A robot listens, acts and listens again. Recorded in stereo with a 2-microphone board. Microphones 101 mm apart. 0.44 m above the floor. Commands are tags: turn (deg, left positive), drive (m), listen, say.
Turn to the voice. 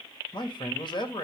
<turn deg="55"/>
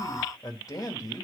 <turn deg="50"/>
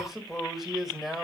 <say>Found it: a man speaking, straight ahead.</say>